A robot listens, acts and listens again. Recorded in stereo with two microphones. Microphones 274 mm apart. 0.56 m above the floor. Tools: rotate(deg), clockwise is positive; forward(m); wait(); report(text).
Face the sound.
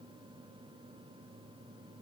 wait()
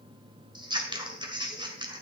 rotate(15)
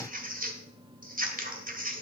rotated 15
rotate(150)
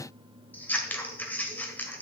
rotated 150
report("Facing the scissors.")